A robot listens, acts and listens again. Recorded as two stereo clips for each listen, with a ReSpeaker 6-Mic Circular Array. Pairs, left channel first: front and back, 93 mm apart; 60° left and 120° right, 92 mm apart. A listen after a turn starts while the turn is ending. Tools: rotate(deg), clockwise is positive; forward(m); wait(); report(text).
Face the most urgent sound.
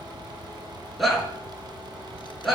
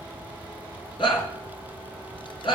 rotate(-90)
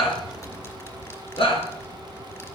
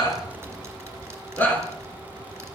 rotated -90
rotate(10)
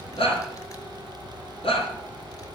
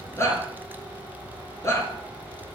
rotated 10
report("Found it: a shout, straight ahead, over 4 m away.")